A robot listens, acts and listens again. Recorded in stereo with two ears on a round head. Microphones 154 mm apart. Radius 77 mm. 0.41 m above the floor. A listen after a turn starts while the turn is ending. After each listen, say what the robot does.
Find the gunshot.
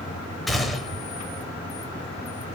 Turn 30° left.
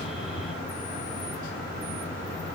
Keep listening.
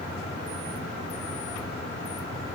I heard a gunshot, but can't make it out now. It was about 30° right or 150° left.